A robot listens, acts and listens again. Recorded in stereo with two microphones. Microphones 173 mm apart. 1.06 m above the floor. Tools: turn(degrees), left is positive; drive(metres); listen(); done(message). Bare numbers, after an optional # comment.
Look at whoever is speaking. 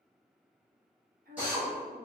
# The woman speaking: about 65° right or 115° right.
turn(-65)
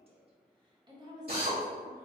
# So it is at 20° right.
turn(-20)
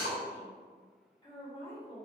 # The woman speaking is now 30° left.
turn(30)
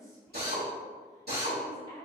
# The woman speaking is now 20° left.
turn(20)
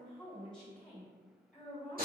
done("Found it: a woman speaking, straight ahead, 1 to 2 m away.")